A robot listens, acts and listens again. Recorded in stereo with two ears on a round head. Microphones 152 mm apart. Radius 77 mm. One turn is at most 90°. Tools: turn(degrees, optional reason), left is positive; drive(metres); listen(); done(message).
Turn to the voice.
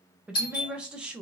turn(degrees=-30)
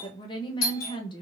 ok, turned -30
turn(degrees=25, reason="So it is at 25° left.")
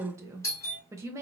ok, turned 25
turn(degrees=-15, reason="The woman speaking is now 15° right.")
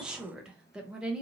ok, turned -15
done("Found it: a woman speaking, straight ahead.")